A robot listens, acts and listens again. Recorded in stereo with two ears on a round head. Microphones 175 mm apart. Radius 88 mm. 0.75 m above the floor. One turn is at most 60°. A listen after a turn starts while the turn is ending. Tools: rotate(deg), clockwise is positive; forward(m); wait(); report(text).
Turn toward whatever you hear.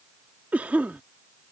rotate(30)
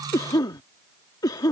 rotate(-20)
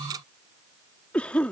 report("Facing the cough.")